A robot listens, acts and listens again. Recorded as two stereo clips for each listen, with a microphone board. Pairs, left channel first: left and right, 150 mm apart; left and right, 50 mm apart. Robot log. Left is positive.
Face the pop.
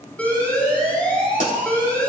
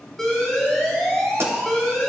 note: The pop: about 60° right or 120° right.
cmd yaw -60
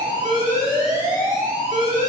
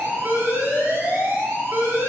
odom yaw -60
cmd idle
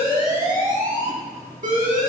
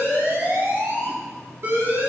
end: I heard a pop, but can't make it out now. It was about straight ahead or 60° right.